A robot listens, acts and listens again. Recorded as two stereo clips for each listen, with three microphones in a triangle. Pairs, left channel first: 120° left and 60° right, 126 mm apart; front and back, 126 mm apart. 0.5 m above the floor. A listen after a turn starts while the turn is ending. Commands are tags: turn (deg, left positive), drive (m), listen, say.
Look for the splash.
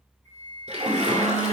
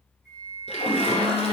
<turn deg="-35"/>
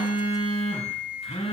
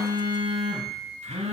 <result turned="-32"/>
<say>Facing where the splash came from. I can't hear it now.</say>